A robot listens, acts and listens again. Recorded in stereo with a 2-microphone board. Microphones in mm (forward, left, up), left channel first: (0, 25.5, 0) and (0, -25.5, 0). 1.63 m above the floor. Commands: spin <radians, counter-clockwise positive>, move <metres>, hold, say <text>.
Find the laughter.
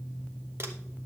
hold
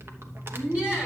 spin -0.35
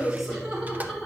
spin -0.52
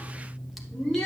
spin 0.26
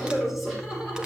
spin -0.17
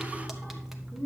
say Found it: laughter, straight ahead.